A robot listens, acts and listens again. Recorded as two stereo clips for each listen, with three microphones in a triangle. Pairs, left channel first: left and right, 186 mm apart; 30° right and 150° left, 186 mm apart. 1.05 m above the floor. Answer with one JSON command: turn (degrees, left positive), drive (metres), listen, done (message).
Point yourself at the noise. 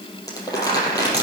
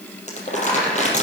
{"turn": 20}
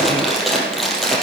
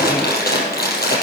{"done": "Facing the crumpling."}